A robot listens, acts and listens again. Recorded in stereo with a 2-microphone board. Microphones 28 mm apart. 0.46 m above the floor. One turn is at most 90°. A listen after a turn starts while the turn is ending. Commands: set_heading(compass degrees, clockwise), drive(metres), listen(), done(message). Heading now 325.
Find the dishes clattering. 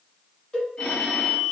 listen()
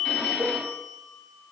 listen()
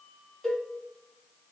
done("I can't make out dishes clattering to turn to.")